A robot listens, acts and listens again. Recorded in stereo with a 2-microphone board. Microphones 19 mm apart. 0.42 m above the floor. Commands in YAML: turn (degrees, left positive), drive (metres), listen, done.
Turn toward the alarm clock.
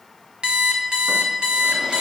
turn: -55
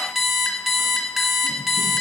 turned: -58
done: "Facing the alarm clock, 1 to 2 m away."